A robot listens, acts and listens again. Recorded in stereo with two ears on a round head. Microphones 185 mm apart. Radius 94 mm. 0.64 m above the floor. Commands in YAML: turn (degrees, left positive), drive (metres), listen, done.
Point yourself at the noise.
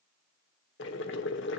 turn: 55
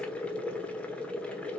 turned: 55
done: "Found it: boiling, straight ahead."